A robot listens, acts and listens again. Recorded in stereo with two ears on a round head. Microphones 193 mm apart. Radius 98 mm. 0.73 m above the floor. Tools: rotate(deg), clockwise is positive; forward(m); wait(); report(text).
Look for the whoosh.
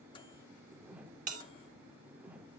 rotate(30)
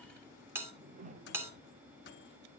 rotate(140)
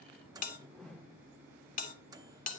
report("Found it: a whoosh, straight ahead.")